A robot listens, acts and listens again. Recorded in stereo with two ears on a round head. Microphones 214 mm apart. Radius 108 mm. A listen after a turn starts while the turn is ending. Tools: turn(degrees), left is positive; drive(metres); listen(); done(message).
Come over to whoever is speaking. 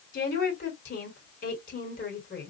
turn(degrees=35)
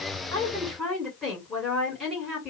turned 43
drive(metres=1.0)
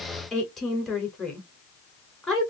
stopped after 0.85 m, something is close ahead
done("Arrived at the woman speaking, straight ahead.")